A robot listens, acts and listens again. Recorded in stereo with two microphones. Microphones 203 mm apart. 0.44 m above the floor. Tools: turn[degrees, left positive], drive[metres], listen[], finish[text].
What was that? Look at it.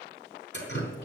Thought: The dripping: about 65° left or 115° left.
Action: turn[65]
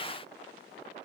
Action: listen[]
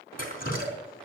Thought: So it is at 45° left.
Action: turn[45]
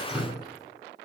Action: finish[Facing the dripping.]